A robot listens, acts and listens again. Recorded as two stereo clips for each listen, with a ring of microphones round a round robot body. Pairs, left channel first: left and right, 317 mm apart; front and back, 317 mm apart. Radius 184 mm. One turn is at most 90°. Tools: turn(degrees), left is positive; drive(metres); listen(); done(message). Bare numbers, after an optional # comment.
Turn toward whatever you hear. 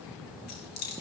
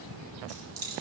# The keys jangling: 130° left.
turn(90)
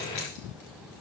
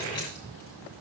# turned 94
# Nothing new. It was at 35° left.
turn(35)
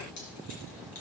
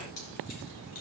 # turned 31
listen()
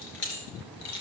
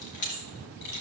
# The keys jangling is now 40° left.
turn(40)
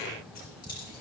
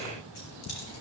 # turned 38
listen()
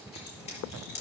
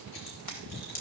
# The keys jangling is now 20° left.
turn(20)
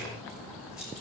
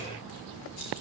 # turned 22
listen()
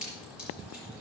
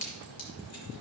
done("Found it: keys jangling, straight ahead, over 4 m away.")